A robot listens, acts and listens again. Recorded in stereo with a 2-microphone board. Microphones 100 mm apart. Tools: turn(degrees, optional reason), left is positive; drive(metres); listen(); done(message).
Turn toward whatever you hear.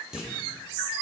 turn(degrees=-30)
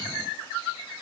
listen()
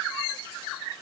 done("I heard a clunk, but can't make it out now. It was about 25° left or 145° right.")